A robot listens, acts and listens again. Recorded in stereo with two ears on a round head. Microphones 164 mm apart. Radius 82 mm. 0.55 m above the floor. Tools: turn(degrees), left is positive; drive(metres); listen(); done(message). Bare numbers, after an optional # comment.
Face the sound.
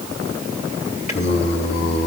# The singing: about 45° left or 135° left.
turn(45)
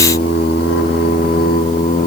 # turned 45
# So it is at 45° left.
turn(45)
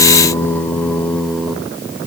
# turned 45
done("Facing the singing.")